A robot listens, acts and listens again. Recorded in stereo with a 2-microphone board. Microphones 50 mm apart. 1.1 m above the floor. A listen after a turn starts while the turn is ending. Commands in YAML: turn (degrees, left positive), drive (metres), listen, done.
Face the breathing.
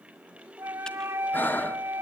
turn: 40
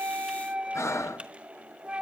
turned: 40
turn: 100
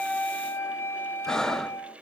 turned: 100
turn: 10
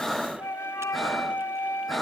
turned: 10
done: "Facing the breathing."